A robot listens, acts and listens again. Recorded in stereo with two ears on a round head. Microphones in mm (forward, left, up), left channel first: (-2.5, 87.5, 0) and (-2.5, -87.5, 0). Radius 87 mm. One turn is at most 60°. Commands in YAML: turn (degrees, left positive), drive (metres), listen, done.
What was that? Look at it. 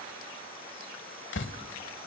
turn: 60
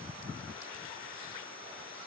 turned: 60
listen: true
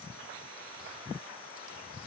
done: "I heard a door slam, but can't make it out now. It was about 5° left or 55° left."